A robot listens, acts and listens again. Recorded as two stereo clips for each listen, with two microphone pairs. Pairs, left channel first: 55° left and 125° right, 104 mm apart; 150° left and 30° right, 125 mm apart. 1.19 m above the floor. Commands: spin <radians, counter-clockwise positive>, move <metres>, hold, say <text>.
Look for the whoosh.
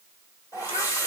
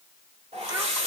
say Found it: a whoosh, straight ahead, 1 to 2 m away.